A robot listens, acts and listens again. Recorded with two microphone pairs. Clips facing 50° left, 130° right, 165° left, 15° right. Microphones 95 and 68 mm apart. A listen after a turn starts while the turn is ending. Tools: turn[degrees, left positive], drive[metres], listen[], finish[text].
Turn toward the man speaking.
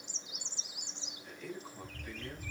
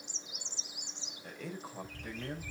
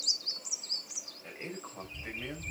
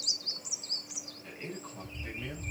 Thought: The man speaking: 130° right.
Action: turn[-130]
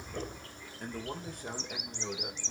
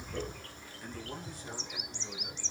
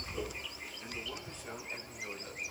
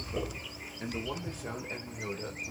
Thought: The man speaking is now 15° left.
Action: turn[15]
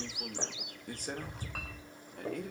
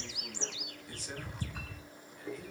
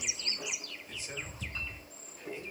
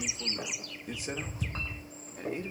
Thought: The man speaking is now 20° left.
Action: turn[20]
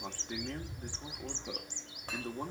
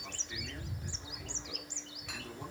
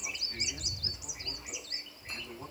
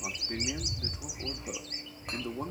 Action: listen[]
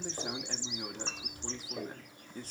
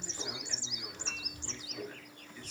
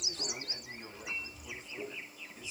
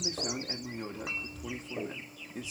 Action: finish[Facing the man speaking, 2 to 4 m away.]